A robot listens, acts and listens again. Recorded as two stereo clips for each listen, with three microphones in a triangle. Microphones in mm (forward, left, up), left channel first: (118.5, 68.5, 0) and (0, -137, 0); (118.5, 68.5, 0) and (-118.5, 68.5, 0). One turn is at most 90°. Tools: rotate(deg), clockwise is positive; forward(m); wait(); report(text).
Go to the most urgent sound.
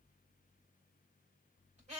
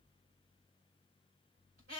wait()
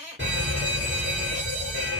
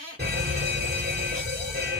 rotate(90)
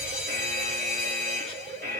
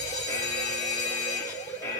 rotate(75)
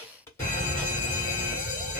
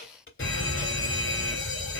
rotate(-15)
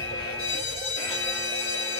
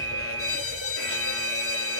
forward(1.0)
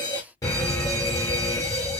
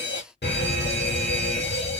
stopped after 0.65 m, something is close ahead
rotate(10)
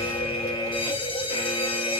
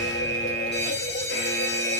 report("I am next to the fire alarm.")